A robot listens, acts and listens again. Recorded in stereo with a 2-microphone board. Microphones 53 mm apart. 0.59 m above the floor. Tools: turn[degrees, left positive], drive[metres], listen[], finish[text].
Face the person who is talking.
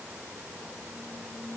Action: listen[]
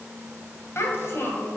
Thought: The child speaking: about 55° left or 125° left.
Action: turn[55]
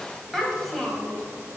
Action: finish[Found it: a child speaking, straight ahead, 2 to 4 m away.]